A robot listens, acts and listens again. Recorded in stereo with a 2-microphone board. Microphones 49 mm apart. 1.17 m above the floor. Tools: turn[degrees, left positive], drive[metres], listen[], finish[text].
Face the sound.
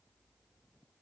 Action: listen[]
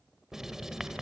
Action: turn[-30]
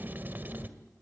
Thought: So it is at 140° right.
Action: turn[-140]
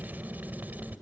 Thought: The writing is now 35° right.
Action: turn[-35]
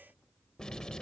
Thought: The writing is now 15° left.
Action: turn[15]
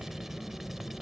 Action: finish[Found it: writing, straight ahead.]